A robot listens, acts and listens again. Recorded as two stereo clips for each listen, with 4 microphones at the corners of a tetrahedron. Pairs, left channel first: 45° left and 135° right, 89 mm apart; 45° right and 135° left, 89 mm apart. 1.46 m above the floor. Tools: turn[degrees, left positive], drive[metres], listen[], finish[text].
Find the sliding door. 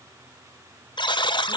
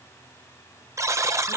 Action: listen[]
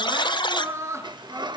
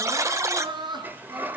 Thought: The sliding door: 155° right.
Action: turn[-155]
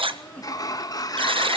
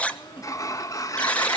Action: finish[Found it: a sliding door, straight ahead, 1 to 2 m away.]